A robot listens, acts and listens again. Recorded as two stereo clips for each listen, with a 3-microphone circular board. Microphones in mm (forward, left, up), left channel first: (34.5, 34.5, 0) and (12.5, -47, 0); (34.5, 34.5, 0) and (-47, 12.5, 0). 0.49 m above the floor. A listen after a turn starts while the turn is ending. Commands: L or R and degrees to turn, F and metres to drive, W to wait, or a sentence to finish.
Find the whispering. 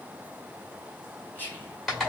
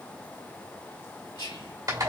L10
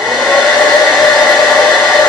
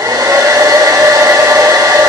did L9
W
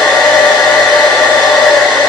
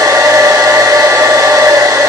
W
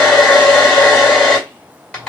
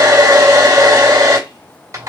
Facing where the whispering came from. I can't hear it now.